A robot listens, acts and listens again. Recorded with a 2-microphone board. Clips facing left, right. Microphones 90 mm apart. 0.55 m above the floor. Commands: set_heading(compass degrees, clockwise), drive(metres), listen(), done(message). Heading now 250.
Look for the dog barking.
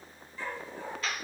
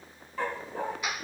set_heading(320)
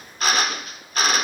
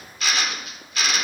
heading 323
listen()
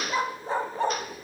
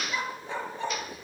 set_heading(278)
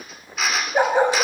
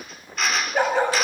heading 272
set_heading(252)
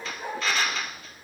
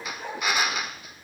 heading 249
done("Facing the dog barking, 1 to 2 m away.")